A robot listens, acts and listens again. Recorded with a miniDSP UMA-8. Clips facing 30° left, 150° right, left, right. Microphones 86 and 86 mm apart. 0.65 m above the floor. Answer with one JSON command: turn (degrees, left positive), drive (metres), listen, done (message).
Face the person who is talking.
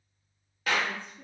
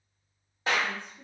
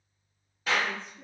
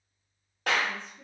{"turn": 145}
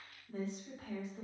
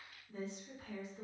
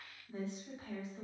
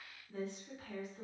{"turn": 30}
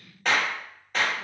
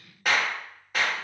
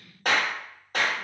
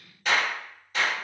{"done": "Facing the woman speaking."}